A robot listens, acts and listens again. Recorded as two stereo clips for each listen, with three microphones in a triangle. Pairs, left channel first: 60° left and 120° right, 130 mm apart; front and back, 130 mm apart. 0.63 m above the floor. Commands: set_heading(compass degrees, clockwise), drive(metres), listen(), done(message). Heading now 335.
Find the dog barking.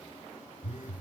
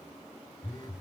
listen()
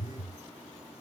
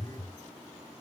listen()
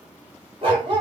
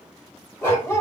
set_heading(45)
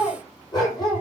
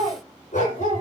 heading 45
done("Facing the dog barking.")